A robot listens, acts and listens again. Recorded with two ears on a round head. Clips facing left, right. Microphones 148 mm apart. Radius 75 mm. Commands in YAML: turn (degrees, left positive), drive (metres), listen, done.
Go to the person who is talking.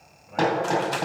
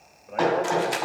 turn: -60
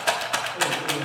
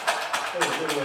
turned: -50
turn: -70
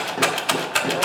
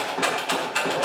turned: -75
listen: true
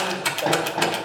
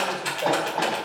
listen: true
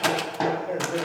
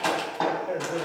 drive: 1.0
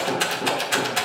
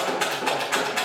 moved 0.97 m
listen: true
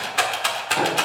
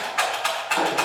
listen: true
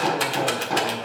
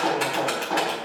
done: "I heard a man speaking from this way, but can't make it out now. I did not reach it."